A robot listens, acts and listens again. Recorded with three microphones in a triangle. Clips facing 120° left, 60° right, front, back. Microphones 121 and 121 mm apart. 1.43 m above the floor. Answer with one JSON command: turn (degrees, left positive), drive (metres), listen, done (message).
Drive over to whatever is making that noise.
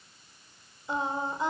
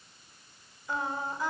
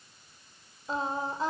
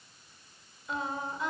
{"turn": 55}
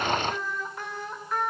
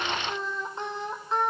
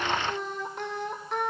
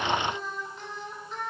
{"drive": 1.0}
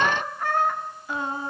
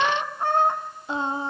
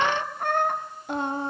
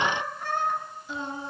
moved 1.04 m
{"drive": 1.0}
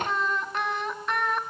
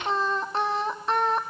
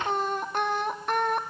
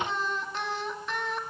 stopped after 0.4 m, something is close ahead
{"turn": -10}
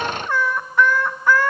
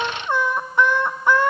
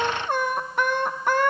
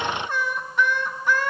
{"done": "I am next to the singing."}